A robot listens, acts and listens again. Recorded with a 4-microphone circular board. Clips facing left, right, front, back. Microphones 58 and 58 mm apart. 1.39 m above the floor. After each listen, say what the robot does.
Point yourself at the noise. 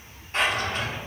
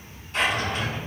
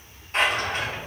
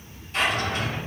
Turn 40° left.
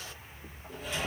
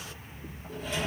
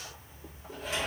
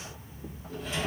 Found it: a drawer, straight ahead, 2 to 4 m away.